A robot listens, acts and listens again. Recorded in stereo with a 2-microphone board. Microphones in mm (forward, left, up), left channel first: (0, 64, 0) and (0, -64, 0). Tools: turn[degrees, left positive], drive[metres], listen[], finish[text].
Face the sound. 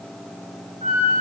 Action: turn[-90]
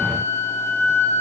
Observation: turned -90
Action: finish[Facing the flute.]